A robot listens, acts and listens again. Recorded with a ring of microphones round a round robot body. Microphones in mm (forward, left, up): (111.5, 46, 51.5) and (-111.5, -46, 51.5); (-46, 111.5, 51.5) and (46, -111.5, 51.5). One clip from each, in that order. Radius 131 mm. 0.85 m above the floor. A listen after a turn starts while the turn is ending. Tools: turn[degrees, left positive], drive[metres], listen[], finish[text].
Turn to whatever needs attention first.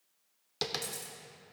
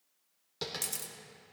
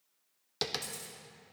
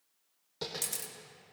Action: listen[]
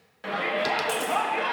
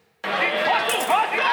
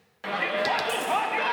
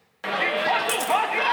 Thought: The shout: 135° right.
Action: turn[-135]
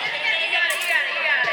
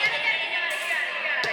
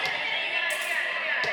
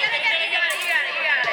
Thought: The shout is now 30° right.
Action: turn[-30]
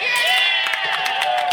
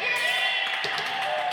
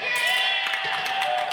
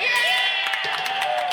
Thought: The shout is now 15° left.
Action: turn[15]
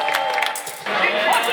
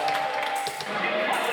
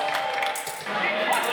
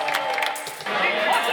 Action: finish[Facing the shout.]